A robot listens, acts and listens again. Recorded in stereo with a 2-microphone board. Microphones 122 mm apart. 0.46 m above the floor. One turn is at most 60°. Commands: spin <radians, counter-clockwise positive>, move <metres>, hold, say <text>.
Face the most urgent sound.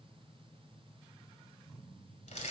hold
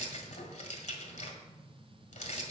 hold
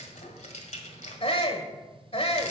spin 0.87
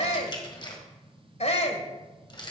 spin 1.05
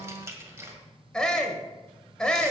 spin 0.17
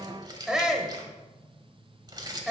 say Found it: a shout, straight ahead.